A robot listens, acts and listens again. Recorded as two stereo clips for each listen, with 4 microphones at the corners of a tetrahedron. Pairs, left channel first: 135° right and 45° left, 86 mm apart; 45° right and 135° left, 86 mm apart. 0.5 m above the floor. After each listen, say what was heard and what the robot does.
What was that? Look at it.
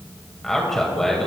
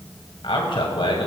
The man speaking: 50° right. Turn 50° right.
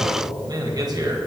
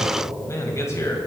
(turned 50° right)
The man speaking is now 10° left. Turn 10° left.
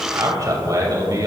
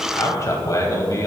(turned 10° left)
Facing the man speaking, 2 to 4 m away.